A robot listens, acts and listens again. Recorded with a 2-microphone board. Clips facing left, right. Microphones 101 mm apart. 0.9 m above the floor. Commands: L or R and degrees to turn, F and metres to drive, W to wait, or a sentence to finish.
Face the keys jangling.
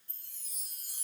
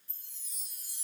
W
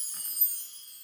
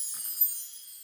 R30
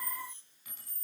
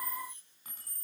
R135
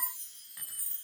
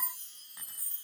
R25
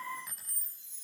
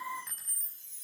Found it: keys jangling, straight ahead.